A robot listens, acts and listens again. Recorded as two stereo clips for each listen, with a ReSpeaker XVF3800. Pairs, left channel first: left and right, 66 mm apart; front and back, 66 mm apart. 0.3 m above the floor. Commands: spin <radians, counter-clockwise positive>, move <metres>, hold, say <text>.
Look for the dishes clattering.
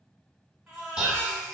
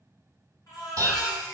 spin -2.88
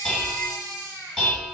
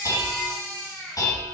spin 0.17
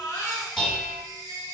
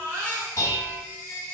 say Found it: dishes clattering, straight ahead.